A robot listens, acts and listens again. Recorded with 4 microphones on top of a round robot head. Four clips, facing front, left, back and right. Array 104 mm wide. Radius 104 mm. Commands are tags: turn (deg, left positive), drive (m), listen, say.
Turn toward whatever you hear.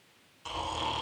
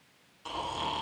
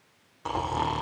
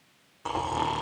<turn deg="-135"/>
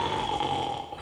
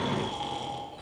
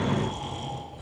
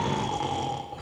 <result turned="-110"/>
<turn deg="-25"/>
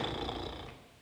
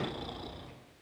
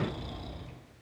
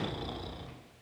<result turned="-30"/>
<say>Found it: snoring, straight ahead, 1 to 2 m away.</say>